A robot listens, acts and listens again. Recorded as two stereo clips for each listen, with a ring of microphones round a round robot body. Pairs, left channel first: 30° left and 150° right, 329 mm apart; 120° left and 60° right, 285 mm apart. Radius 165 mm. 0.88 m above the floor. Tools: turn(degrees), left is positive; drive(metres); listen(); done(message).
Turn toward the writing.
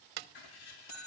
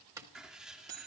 turn(degrees=30)
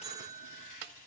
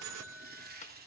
done("Found it: writing, straight ahead, 2 to 4 m away.")